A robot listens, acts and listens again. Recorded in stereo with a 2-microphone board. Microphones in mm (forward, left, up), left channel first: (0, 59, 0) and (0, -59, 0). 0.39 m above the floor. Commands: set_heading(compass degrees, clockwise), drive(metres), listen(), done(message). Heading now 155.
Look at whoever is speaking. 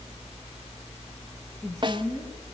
set_heading(125)
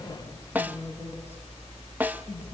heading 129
listen()
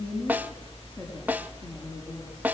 set_heading(114)
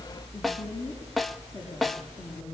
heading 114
listen()
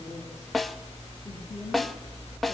listen()
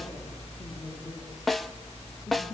done("I heard a woman speaking, but can't make it out now. It was about straight ahead or 150° left.")